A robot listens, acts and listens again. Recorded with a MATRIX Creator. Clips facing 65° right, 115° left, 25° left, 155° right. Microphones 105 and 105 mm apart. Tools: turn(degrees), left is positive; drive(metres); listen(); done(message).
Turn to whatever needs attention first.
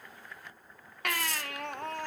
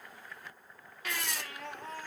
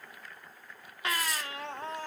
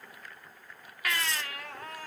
turn(degrees=-40)
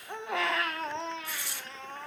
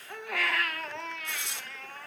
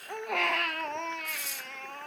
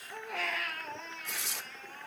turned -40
done("Found it: a baby crying, straight ahead, under 1 m away.")